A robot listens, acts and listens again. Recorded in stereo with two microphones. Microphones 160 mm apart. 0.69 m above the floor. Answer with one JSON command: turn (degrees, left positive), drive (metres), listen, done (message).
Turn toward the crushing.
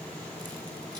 {"listen": true}
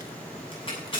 {"turn": 35}
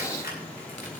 {"listen": true}
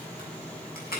{"turn": 110}
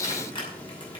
{"turn": 30}
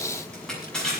{"done": "Facing the crushing."}